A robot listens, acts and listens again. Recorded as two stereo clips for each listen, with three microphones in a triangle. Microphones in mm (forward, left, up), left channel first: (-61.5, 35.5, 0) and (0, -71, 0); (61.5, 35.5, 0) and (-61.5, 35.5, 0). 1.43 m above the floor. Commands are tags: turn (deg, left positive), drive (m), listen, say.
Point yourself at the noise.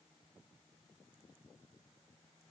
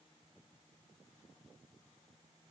<listen/>
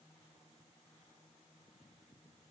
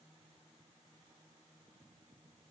<listen/>
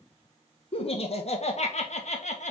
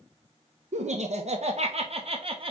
<turn deg="135"/>
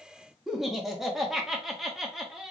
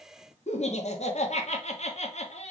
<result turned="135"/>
<turn deg="25"/>
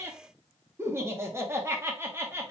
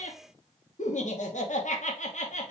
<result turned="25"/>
<turn deg="10"/>
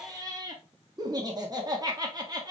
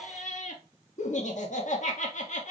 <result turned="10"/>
<say>Facing the laughter, 1 to 2 m away.</say>